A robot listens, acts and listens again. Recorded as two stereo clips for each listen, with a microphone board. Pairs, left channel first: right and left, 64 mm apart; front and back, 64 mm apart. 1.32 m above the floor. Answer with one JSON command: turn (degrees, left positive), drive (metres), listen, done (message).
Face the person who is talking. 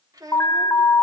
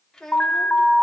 {"turn": 80}
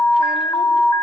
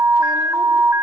{"listen": true}
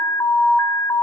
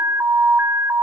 {"listen": true}
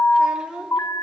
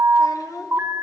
{"turn": 15}
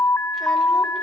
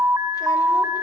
{"listen": true}
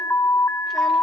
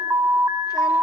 {"listen": true}
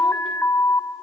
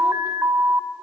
{"done": "I heard a child speaking from this way, but can't make it out now."}